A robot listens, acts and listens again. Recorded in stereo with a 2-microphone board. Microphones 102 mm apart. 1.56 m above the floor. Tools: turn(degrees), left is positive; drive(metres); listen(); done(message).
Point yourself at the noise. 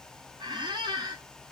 turn(degrees=-45)
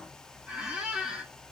turn(degrees=-10)
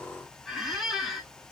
done("Found it: a squeak, straight ahead.")